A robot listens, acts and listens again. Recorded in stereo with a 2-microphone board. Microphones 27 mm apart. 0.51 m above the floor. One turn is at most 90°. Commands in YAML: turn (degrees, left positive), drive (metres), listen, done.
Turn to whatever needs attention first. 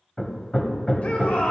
turn: 60
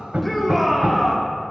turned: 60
turn: 10
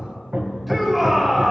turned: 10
done: "Facing the shout, 1 to 2 m away."